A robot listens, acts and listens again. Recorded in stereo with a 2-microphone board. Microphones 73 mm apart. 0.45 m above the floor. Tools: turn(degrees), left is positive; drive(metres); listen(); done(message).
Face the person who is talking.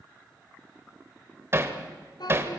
turn(degrees=75)
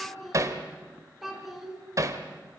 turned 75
done("Facing the child speaking, 2 to 4 m away.")